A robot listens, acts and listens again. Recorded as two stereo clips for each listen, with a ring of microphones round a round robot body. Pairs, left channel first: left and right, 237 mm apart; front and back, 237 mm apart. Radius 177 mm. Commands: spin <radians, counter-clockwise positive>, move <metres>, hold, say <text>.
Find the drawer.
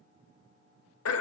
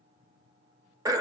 hold
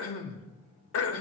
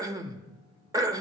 hold
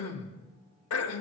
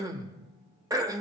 say I can't make out a drawer, only throat clearing.